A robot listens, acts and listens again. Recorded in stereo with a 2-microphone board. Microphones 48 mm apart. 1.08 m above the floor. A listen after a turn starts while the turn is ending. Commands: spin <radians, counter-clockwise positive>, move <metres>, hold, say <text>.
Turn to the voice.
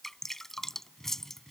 hold
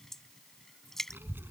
spin -0.79
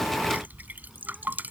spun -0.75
say Facing the child speaking.